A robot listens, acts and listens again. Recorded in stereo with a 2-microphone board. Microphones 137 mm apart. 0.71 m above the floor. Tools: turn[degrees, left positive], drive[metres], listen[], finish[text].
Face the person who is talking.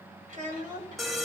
Thought: The child speaking: about 70° right or 110° right.
Action: turn[-70]
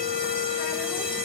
Action: listen[]
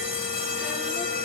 Action: listen[]
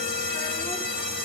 Action: finish[I heard a child speaking, but can't make it out now. It was about straight ahead or 40° right.]